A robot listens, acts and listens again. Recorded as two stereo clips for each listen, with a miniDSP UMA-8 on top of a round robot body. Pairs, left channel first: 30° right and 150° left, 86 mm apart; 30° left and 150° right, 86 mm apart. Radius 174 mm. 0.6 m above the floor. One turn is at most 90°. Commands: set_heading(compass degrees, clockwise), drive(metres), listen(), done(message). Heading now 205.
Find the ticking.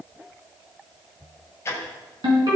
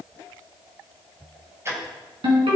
set_heading(295)
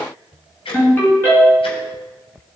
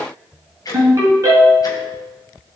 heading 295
set_heading(315)
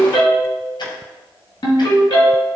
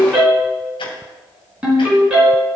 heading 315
done("Facing the ticking, 2 to 4 m away.")